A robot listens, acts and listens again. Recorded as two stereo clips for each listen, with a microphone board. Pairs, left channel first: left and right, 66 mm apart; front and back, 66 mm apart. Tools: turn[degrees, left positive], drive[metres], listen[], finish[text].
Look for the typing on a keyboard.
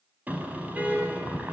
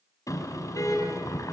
Action: listen[]
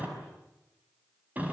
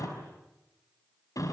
Action: listen[]
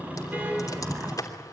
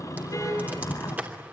Thought: The typing on a keyboard: 120° left.
Action: turn[120]
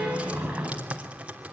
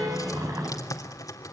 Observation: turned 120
Thought: The typing on a keyboard is now 20° right.
Action: turn[-20]
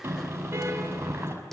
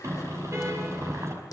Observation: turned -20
Action: listen[]
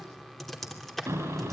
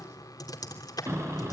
Action: finish[Found it: typing on a keyboard, straight ahead, 2 to 4 m away.]